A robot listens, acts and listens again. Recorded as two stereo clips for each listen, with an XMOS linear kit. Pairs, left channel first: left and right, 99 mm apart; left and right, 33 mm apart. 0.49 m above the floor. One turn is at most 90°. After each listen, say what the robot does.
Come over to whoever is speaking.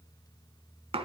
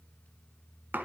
Keep listening.
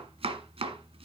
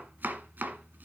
Keep listening.
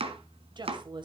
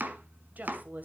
Turn 50° right.
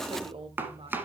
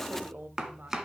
Turn 75° right.
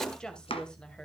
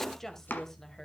Turn 10° left.
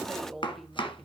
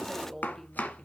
Drive 1.0 m forward.
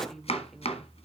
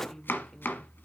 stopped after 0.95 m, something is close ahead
Arrived at the woman speaking, straight ahead.